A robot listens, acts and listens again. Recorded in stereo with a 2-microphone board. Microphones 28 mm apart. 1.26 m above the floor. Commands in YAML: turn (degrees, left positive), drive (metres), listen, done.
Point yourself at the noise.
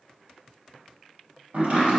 turn: -70
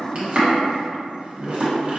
turn: -40
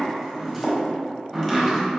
turn: 10
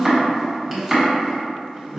done: "Facing the chopping, 1 to 2 m away."